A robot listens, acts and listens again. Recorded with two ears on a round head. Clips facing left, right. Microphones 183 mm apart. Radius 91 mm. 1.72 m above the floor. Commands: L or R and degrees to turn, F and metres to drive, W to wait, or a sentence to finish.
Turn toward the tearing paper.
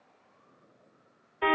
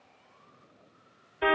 W
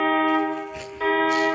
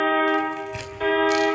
R70
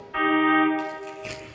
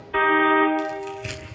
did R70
R25
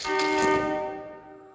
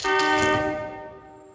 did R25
W
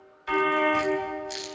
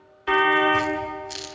Found it: tearing paper, straight ahead.